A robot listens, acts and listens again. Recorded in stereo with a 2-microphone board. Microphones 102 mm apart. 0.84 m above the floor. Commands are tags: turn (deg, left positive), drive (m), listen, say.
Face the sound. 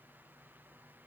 <listen/>
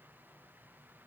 <listen/>
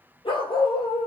<turn deg="55"/>
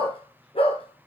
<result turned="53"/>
<turn deg="75"/>
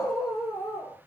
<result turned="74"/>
<say>Facing the dog barking, over 4 m away.</say>